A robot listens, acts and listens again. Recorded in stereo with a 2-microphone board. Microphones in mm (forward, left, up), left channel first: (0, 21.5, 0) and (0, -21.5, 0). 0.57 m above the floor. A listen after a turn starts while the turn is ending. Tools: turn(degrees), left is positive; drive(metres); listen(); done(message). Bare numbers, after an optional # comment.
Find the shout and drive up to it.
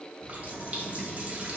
listen()
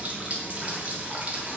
listen()
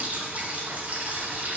done("I can't make out a shout to turn to.")